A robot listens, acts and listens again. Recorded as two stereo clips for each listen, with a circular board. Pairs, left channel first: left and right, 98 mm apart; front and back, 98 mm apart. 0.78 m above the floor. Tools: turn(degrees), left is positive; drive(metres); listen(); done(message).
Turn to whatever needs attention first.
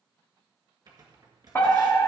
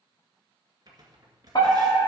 turn(degrees=30)
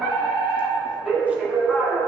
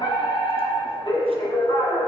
done("Facing the fire alarm, 2 to 4 m away.")